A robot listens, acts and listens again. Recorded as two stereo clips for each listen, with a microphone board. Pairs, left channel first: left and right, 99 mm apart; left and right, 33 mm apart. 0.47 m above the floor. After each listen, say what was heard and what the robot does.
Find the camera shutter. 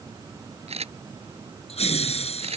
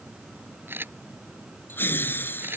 Turn 90° right.
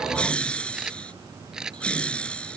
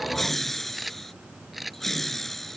Facing the camera shutter.